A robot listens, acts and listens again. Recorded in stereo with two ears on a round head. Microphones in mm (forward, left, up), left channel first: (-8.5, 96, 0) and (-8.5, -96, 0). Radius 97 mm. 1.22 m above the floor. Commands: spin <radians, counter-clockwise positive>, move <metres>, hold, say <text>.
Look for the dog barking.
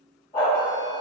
spin 0.35
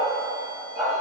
spin -0.17
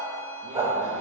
spin -0.26
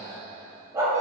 spin -0.35
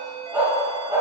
spin -0.26
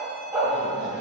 spin -0.17
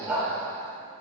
say Facing the dog barking.